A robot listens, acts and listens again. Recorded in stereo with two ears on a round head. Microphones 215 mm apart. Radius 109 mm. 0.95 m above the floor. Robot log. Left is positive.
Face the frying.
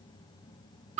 cmd idle
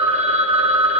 cmd idle
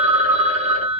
end: I can't make out frying, only a phone ringing.